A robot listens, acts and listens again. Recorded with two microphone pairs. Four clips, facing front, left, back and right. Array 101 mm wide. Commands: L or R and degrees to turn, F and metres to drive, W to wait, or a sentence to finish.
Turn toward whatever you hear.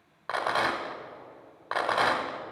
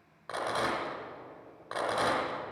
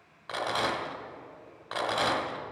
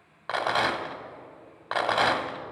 R55
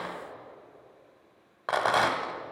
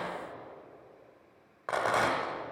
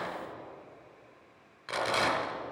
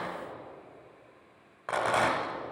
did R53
Found it: a rattle, straight ahead.